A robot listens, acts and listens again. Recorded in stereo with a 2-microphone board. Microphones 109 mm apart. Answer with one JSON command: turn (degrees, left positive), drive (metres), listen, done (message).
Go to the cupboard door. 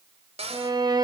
{"turn": -70}
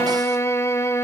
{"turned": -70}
{"listen": true}
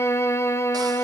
{"listen": true}
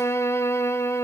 {"done": "I heard a cupboard door, but can't make it out now. It was about straight ahead or 40° right. I did not reach it."}